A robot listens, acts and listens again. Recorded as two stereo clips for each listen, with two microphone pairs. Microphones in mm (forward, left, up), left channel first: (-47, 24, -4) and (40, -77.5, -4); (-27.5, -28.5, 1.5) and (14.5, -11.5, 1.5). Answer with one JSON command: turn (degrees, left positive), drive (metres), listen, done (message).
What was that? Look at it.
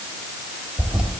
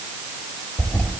{"turn": -125}
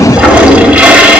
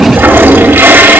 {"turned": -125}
{"turn": 30}
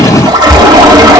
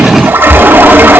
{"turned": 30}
{"done": "Facing the toilet flushing, 1 to 2 m away."}